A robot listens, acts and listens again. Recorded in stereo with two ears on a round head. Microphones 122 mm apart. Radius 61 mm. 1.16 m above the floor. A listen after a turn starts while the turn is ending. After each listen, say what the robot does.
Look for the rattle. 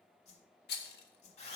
Turn 90° left.
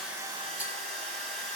Keep listening.
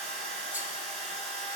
Keep listening.
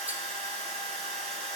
I heard a rattle from this way, but can't make it out now.